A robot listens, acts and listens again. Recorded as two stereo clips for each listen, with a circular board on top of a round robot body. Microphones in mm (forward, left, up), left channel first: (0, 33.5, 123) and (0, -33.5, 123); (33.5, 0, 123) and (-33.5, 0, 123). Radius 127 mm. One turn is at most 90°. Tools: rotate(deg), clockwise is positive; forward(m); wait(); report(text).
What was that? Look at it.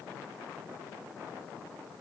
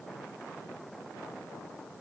wait()
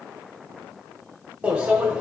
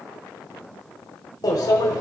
rotate(20)
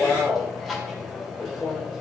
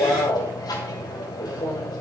report("Facing the microwave, 2 to 4 m away.")